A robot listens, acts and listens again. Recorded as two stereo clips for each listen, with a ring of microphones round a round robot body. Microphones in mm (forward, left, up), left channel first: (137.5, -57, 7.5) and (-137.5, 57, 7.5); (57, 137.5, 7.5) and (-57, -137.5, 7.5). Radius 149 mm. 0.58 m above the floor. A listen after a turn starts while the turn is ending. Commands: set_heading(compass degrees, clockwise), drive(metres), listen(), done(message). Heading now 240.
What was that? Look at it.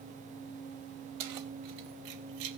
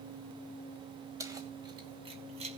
set_heading(60)
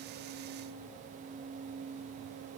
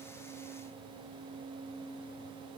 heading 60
listen()
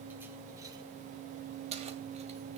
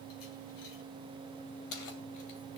set_heading(330)
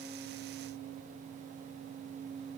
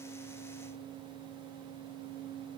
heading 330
listen()
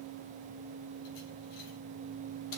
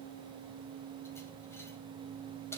listen()
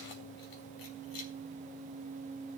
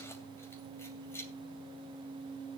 set_heading(345)
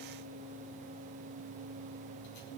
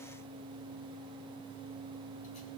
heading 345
listen()
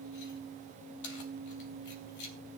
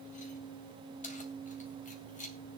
done("Found it: keys jangling, straight ahead, 2 to 4 m away.")